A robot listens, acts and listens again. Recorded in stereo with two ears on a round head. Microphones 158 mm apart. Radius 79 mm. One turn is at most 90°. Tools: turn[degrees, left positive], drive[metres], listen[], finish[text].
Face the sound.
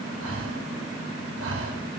Action: turn[-90]
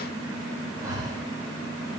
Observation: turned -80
Thought: So it is at 20° right.
Action: turn[-20]
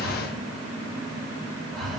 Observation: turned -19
Action: finish[Found it: breathing, straight ahead.]